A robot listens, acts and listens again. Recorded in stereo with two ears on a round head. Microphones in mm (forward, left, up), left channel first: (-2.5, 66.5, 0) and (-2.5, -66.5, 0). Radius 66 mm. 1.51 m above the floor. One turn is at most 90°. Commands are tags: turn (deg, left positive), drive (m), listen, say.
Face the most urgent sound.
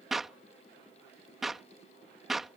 <listen/>
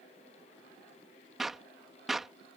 <listen/>
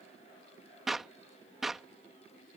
<say>I can't make out anything urgent, only a clap.</say>